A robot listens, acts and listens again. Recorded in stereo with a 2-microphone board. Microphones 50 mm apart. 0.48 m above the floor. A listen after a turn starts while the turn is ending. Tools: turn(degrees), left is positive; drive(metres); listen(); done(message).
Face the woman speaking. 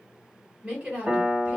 turn(degrees=-25)
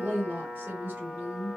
turn(degrees=-125)
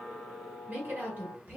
turn(degrees=-50)
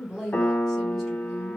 listen()
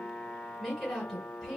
done("Found it: a woman speaking, straight ahead, 1 to 2 m away.")